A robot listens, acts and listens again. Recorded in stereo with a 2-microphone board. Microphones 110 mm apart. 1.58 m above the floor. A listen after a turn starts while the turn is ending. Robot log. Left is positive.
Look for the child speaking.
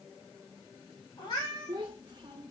note: The child speaking: about 35° right or 145° right.
cmd yaw -35
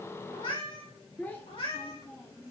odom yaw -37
note: So it is at 35° left.
cmd yaw +35
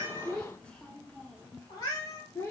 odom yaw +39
note: The child speaking is now 25° left.
cmd yaw +25
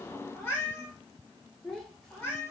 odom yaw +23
end: Facing the child speaking, 1 to 2 m away.